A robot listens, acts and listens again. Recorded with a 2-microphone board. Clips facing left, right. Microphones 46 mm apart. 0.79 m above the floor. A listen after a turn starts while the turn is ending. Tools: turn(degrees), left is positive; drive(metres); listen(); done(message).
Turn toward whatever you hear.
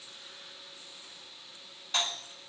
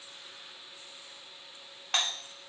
turn(degrees=-60)
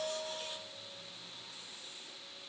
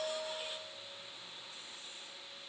listen()
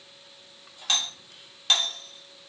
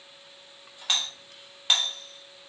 turn(degrees=-15)
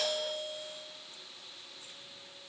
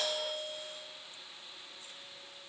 done("Facing the doorbell, 1 to 2 m away.")